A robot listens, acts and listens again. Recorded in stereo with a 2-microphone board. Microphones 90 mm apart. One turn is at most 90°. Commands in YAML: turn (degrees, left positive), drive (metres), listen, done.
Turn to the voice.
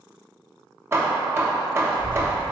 turn: -65
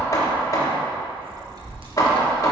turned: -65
turn: -50
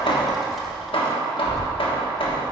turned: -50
done: "Facing the child speaking."